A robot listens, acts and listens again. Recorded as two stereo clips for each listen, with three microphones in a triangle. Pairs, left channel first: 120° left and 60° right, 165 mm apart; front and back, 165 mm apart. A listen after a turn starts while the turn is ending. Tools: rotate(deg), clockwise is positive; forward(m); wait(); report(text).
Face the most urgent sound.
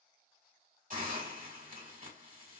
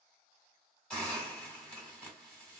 wait()
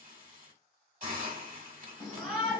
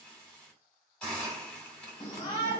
rotate(-30)
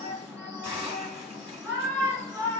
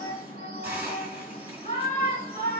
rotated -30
rotate(-10)
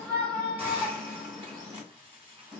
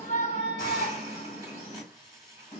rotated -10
report("Facing the shout.")